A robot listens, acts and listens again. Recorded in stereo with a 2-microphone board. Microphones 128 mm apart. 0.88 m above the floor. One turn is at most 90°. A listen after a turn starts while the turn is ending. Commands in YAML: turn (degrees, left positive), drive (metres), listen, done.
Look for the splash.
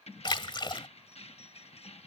turn: 40
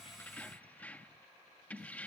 listen: true
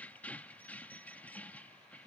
done: "I heard a splash, but can't make it out now. It was about straight ahead or 100° left."